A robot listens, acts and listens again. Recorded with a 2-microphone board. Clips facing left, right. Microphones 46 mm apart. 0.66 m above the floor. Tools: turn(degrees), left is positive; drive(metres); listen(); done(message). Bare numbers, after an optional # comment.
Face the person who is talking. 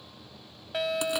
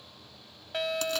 listen()
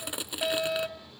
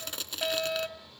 listen()
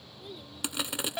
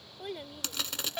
# The child speaking: about 65° right or 115° right.
turn(-65)
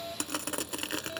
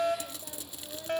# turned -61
listen()
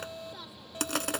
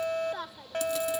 # So it is at 50° right.
turn(-50)
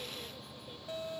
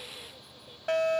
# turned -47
listen()
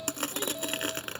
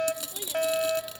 listen()
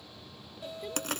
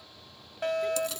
done("I heard a child speaking from this way, but can't make it out now.")